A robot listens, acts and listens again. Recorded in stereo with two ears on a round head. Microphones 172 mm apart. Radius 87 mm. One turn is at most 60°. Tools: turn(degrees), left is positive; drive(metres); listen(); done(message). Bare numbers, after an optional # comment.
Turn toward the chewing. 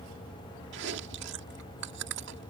# The chewing: about 65° right or 115° right.
turn(-60)
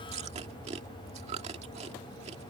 # So it is at 35° right.
turn(-35)
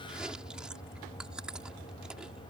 done("Facing the chewing.")